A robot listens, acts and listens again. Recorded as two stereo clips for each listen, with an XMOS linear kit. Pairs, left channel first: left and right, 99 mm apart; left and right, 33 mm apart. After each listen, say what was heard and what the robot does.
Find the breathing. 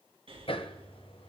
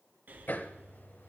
The breathing: about 65° right or 115° right. Turn 65° right.
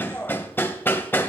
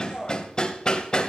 Keep listening.
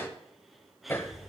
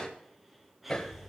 Facing the breathing, 2 to 4 m away.